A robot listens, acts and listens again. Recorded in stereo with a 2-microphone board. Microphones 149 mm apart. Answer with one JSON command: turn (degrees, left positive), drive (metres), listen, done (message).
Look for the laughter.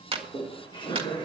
{"turn": 30}
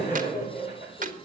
{"turn": 120}
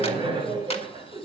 {"turn": -35}
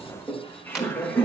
{"turn": 15}
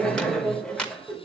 {"done": "Found it: laughter, straight ahead."}